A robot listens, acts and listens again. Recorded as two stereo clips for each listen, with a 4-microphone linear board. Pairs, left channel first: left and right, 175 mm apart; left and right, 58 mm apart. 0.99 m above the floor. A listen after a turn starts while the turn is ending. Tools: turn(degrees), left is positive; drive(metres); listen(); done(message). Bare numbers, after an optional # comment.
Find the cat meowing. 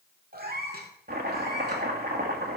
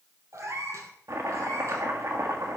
# The cat meowing: about 60° right or 120° right.
turn(-60)
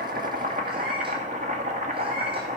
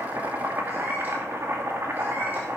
listen()
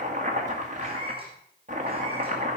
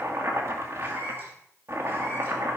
# So it is at 30° right.
turn(-30)
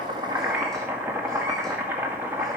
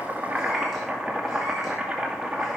listen()
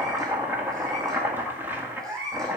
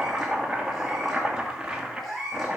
done("Facing the cat meowing.")